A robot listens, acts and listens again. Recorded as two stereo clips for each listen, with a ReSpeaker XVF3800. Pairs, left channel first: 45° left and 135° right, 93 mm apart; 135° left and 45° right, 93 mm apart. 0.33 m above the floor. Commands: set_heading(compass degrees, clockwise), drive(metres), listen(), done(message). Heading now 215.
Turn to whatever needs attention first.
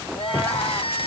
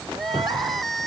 set_heading(170)
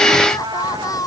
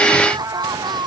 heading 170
done("Found it: crying, straight ahead.")